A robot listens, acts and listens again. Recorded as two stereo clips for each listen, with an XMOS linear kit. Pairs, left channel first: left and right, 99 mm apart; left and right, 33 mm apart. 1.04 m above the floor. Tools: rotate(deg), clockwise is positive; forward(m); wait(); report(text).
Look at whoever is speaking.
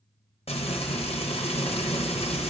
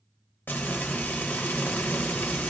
wait()
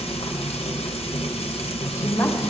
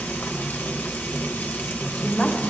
rotate(-30)
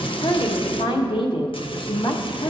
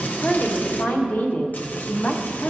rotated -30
rotate(-115)
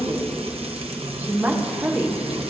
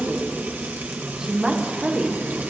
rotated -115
rotate(20)
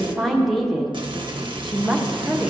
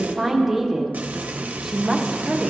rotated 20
report("Found it: a woman speaking, straight ahead.")